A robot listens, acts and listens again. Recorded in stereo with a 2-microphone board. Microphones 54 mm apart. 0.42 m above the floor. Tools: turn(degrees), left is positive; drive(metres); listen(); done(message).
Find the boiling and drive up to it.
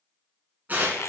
listen()
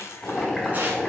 turn(degrees=15)
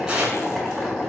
drive(metres=1.0)
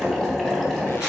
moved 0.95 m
turn(degrees=15)
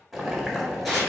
drive(metres=1.0)
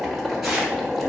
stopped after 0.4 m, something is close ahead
done("I am next to the boiling.")